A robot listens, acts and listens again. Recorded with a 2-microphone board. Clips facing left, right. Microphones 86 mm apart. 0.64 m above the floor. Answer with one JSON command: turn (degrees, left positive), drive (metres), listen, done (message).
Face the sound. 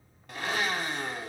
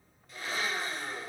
{"turn": 90}
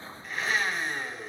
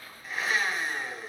{"done": "Facing the blender, 1 to 2 m away."}